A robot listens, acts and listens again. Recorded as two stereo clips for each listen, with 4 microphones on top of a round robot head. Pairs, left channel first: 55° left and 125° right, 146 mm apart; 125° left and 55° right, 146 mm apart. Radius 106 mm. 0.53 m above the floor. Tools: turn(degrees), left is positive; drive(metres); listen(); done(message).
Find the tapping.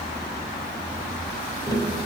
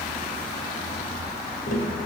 turn(degrees=115)
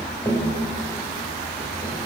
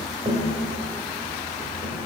turn(degrees=-20)
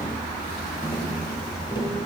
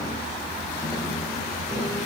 done("Facing the tapping, 1 to 2 m away.")